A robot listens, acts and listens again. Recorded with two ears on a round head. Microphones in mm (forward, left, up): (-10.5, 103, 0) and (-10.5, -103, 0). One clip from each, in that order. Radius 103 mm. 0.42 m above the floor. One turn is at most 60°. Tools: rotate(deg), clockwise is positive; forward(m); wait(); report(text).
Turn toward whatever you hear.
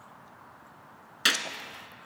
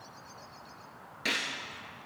rotate(-60)
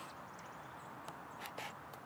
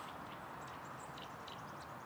wait()
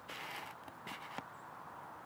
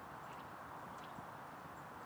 report("I heard a gunshot, but can't make it out now. It was about 5° left or 55° left.")